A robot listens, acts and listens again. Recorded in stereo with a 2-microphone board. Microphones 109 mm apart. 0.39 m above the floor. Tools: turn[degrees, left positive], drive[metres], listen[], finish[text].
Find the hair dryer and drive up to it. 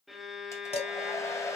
Thought: The hair dryer: about 30° left or 150° left.
Action: turn[30]
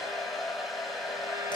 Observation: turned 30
Action: drive[1.0]
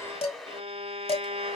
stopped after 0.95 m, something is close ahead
Action: finish[I am next to the hair dryer.]